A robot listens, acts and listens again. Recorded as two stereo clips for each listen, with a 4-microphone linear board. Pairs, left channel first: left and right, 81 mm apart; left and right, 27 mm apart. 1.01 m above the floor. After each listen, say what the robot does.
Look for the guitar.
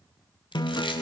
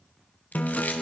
Turn 55° left.
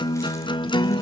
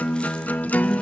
Turn 70° left.
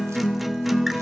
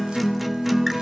Found it: a guitar, straight ahead, under 1 m away.